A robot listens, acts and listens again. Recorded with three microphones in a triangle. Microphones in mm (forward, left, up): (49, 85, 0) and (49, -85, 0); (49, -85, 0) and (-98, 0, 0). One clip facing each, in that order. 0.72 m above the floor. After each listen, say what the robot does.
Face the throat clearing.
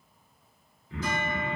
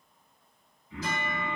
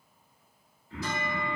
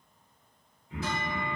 Turn 75° left.
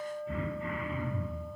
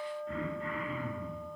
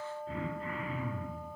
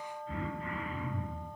Turn 10° left.
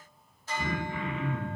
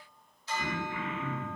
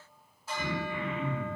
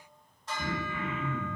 Turn 10° left.
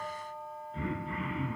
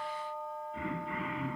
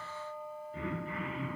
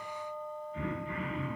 Found it: throat clearing, straight ahead, 1 to 2 m away.